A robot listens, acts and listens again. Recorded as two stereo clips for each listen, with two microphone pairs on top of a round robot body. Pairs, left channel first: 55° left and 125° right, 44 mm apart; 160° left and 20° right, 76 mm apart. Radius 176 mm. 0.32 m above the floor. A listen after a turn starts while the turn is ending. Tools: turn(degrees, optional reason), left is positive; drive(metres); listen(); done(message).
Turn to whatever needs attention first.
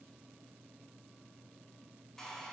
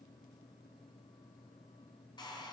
listen()
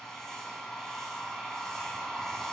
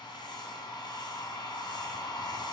listen()
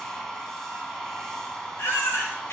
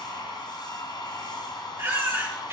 turn(degrees=40, reason="The baby crying: 40° left.")
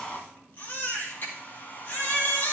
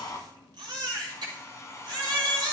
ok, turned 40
turn(degrees=10, reason="The baby crying is now 10° left.")
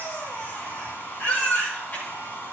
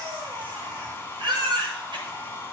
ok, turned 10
done("Facing the baby crying.")